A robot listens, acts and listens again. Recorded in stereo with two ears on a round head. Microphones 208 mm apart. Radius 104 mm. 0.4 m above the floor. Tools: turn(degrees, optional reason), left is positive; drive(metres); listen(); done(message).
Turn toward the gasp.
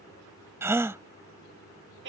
turn(degrees=-30)
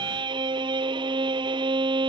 listen()
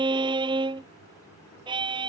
done("I heard a gasp, but can't make it out now. It was about 20° left or 140° right.")